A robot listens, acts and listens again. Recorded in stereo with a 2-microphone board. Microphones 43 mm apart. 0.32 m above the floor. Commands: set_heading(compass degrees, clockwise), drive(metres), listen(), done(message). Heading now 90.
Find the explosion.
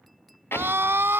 set_heading(25)
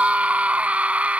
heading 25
listen()
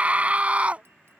done("I heard an explosion, but can't make it out now. It was about straight ahead or 50° left.")